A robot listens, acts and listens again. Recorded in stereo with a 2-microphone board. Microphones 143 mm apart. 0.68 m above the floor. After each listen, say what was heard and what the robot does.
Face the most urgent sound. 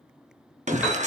The shout: about 55° right or 125° right. Turn 55° right.
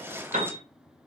Keep listening.
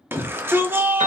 So it is at 20° right. Turn 20° right.
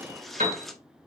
Keep listening.
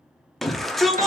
Found it: a shout, straight ahead.